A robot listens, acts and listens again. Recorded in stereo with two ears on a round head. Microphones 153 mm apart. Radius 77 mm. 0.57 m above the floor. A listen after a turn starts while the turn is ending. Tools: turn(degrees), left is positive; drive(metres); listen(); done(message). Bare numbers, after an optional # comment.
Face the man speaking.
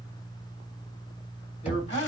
# The man speaking: about 40° left or 140° left.
turn(40)
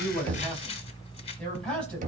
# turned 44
done("Found it: a man speaking, straight ahead.")